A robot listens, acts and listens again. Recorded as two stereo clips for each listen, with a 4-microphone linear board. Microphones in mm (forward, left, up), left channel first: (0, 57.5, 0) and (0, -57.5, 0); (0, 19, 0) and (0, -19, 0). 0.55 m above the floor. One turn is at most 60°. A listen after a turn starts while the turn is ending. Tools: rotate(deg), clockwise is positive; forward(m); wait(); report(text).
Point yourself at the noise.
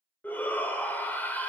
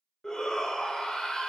rotate(-15)
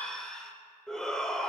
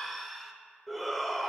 report("Facing the shout.")